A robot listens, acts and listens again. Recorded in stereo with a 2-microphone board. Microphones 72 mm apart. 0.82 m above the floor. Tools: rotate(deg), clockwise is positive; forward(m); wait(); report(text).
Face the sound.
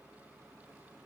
wait()
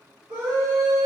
rotate(60)
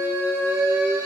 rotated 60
rotate(35)
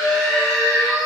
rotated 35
report("Facing the scream.")